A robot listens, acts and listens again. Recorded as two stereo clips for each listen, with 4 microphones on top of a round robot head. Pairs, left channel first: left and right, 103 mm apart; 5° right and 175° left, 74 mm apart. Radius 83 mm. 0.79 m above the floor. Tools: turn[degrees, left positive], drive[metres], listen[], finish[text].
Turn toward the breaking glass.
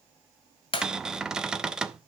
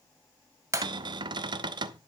Thought: The breaking glass: 125° left.
Action: turn[125]
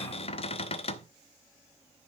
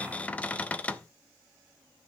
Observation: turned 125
Action: finish[Facing where the breaking glass came from. I can't hear it now.]